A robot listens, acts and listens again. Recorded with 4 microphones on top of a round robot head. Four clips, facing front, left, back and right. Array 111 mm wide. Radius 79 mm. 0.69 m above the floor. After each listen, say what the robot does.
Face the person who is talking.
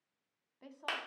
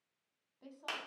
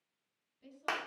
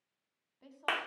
Turn 10° left.
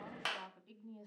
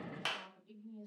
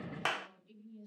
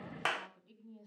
Found it: a woman speaking, straight ahead.